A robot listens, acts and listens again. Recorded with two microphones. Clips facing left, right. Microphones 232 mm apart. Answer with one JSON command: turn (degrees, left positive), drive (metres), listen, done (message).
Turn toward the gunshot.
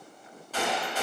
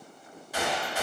{"turn": -30}
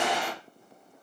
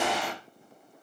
{"turn": 20}
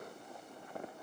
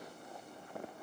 {"done": "Facing where the gunshot came from. I can't hear it now."}